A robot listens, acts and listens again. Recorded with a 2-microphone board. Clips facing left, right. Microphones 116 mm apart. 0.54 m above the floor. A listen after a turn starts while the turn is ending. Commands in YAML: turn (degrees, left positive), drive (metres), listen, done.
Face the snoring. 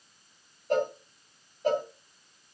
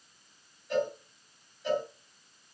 listen: true
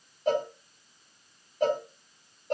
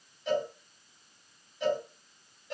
listen: true
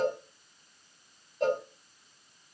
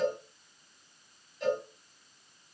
done: "I can't make out snoring to turn to."